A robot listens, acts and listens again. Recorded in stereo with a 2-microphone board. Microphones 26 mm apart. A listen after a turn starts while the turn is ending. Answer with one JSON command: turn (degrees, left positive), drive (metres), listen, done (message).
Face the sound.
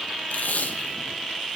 {"turn": 90}
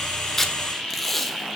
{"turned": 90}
{"done": "Found it: tape being pulled, straight ahead, 1 to 2 m away."}